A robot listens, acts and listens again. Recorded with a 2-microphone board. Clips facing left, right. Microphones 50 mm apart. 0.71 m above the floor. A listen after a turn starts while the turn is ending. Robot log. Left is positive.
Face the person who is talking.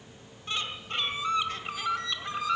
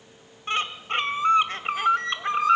cmd idle
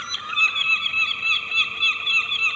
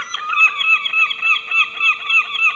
cmd idle
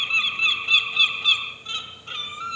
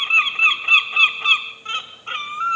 end: I can't make out anyone speaking, only a bird.